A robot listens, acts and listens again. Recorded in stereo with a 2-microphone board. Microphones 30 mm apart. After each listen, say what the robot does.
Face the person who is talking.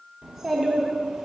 Turn 30° right.
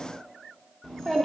Turn 20° left.
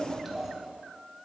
Found it: a child speaking, straight ahead, 1 to 2 m away.